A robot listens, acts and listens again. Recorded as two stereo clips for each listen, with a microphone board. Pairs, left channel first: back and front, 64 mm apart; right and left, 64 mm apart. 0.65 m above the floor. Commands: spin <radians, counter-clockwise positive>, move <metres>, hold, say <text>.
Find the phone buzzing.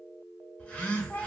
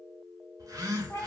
spin 1.92
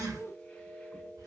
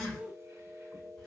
spin -0.17
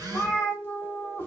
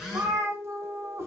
say Facing the phone buzzing, under 1 m away.